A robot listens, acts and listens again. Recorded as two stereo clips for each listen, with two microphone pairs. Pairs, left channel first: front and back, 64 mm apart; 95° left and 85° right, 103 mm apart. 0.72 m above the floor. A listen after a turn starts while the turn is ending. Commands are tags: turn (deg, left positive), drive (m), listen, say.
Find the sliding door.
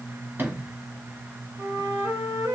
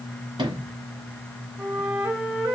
<turn deg="-125"/>
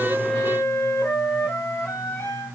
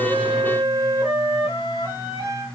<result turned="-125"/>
<listen/>
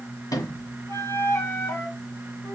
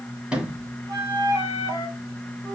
<say>Facing the sliding door, 1 to 2 m away.</say>